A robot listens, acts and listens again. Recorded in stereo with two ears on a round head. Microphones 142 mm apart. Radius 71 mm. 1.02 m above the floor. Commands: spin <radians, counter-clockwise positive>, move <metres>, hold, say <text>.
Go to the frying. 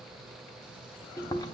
hold
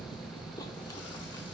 hold
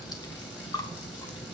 say I can't make out frying, only chewing.